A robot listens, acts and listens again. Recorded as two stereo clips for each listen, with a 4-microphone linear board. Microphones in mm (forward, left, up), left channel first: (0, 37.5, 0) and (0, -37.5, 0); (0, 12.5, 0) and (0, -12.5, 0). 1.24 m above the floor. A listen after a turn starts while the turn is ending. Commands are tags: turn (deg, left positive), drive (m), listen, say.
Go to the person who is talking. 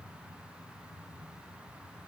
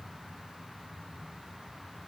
<listen/>
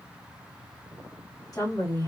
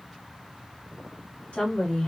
<turn deg="55"/>
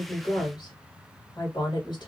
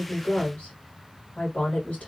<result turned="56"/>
<turn deg="70"/>
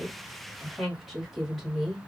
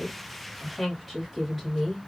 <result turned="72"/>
<drive m="1.0"/>
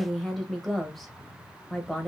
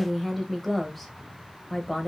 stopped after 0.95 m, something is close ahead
<say>I am next to the woman speaking.</say>